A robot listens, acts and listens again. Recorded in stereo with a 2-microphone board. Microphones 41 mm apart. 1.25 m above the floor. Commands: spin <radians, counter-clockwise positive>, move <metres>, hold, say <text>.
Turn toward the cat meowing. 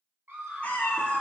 spin 0.61
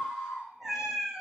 spin -0.17
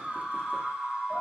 hold
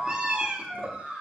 spin -0.44
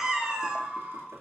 spin -0.26
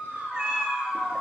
spin -0.26
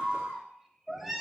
say Facing the cat meowing, 1 to 2 m away.